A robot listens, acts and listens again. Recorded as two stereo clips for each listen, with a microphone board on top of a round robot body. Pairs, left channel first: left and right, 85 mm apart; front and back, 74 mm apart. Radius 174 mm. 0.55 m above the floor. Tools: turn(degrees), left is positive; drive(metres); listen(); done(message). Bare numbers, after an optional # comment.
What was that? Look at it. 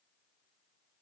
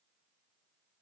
listen()
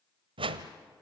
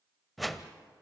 # The whoosh: 90° right.
turn(-90)
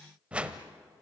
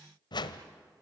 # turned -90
# The whoosh is now 15° right.
turn(-15)
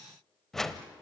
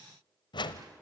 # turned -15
done("Found it: a whoosh, straight ahead.")